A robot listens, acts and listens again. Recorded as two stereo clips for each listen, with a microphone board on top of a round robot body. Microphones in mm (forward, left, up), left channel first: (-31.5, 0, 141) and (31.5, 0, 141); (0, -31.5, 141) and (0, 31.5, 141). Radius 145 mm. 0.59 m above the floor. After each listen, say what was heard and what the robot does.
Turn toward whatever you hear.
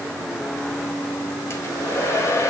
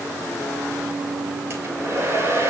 The hair dryer: 140° left. Turn 140° left.
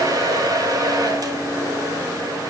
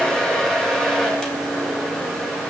The hair dryer is now 10° right. Turn 10° right.
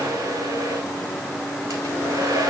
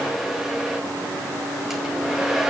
Facing the hair dryer.